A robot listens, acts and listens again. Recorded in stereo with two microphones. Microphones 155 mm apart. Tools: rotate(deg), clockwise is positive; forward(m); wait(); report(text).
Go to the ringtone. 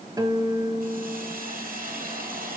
wait()
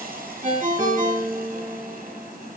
rotate(55)
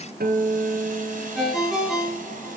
forward(1.0)
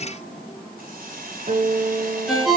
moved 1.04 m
forward(1.0)
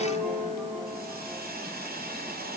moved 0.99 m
wait()
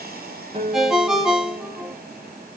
forward(1.0)
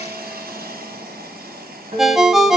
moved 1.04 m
forward(1.0)
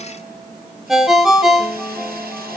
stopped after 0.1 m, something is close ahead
report("Arrived at the ringtone, straight ahead.")